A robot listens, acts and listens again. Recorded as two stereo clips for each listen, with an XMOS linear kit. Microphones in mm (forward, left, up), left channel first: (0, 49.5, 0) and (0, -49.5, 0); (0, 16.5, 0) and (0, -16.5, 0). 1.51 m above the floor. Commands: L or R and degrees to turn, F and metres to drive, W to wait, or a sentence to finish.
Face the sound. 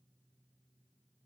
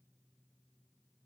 W
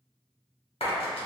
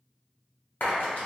L70
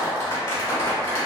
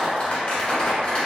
L40
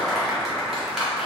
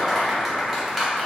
Found it: a clap, straight ahead.